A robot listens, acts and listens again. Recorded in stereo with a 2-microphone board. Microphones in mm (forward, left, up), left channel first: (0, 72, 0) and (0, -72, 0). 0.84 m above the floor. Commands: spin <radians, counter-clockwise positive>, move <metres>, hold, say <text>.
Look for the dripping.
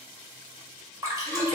spin -0.35
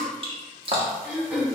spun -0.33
spin -2.44
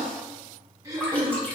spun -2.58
spin 0.17
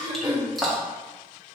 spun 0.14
say Found it: dripping, straight ahead, 1 to 2 m away.